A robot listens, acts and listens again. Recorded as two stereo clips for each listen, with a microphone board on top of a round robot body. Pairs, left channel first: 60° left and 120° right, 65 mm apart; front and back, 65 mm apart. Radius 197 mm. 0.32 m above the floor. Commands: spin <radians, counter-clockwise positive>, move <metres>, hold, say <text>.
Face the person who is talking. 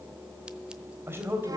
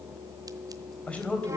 spin -1.22
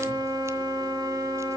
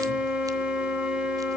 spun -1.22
hold
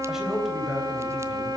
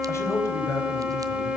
spin -0.61
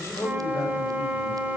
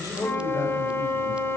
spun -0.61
spin 0.35
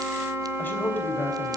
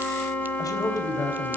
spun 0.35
say Facing the man speaking.